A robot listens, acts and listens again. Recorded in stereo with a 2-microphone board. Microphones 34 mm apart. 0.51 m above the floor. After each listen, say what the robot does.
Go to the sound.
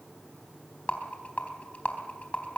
Turn 45° left.
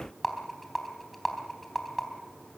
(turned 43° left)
Drive 1.0 m forward.
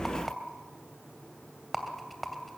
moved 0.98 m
Drive 1.0 m forward.
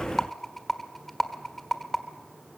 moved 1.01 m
Turn 10° left.
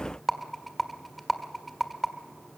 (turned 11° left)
Drive 1.0 m forward.
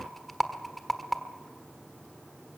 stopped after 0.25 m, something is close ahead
Arrived at the rattle, straight ahead.